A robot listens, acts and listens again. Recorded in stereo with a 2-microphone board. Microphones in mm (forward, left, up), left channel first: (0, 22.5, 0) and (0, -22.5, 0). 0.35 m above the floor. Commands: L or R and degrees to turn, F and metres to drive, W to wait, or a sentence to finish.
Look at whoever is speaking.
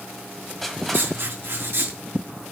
W
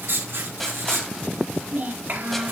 R40
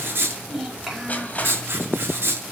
Facing the child speaking, over 4 m away.